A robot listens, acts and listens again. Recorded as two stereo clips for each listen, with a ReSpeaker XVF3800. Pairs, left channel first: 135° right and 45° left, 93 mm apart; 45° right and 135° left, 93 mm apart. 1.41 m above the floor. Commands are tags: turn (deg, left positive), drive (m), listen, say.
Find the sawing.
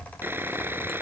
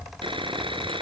<turn deg="110"/>
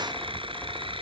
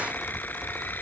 <listen/>
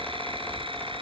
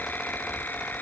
<listen/>
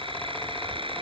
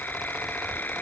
<turn deg="25"/>
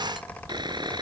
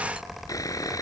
<turn deg="10"/>
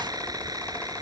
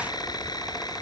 <say>Found it: sawing, straight ahead.</say>